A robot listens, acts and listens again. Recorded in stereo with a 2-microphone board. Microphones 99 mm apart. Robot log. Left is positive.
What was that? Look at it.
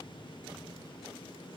cmd idle
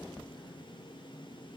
cmd idle
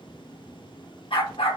note: The dog barking: about 65° left or 115° left.
cmd yaw +65
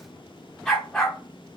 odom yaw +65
note: So it is at 10° left.
cmd yaw +10
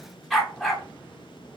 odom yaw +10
end: Found it: a dog barking, straight ahead, 1 to 2 m away.